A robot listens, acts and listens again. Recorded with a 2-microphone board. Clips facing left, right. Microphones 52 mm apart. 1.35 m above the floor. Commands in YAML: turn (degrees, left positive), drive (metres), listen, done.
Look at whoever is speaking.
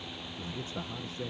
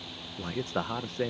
turn: -65
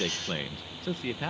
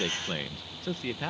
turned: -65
done: "Facing the man speaking."